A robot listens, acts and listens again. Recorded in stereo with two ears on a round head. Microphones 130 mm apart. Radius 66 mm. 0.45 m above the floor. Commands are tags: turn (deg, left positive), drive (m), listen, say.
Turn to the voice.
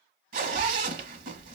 <turn deg="-30"/>
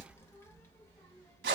<turn deg="20"/>
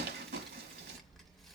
<say>Facing the child speaking.</say>